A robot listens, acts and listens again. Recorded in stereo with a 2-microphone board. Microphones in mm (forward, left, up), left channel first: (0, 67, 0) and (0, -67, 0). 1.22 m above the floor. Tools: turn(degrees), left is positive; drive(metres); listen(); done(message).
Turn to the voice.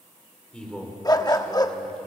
turn(degrees=30)
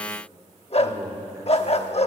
turn(degrees=-20)
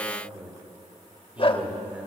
turn(degrees=-10)
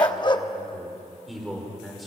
done("Found it: a man speaking, straight ahead, over 4 m away.")